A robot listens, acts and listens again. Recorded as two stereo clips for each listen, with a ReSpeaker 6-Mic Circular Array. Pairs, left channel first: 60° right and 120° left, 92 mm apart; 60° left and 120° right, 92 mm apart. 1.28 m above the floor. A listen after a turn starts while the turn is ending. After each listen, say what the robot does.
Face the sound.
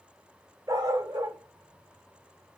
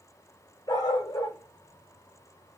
Turn 85° left.
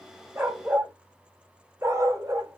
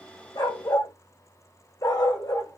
Turn 85° left.
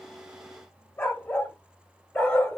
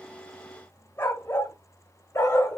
Turn 10° left.
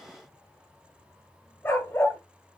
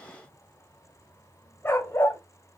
Found it: a dog barking, straight ahead.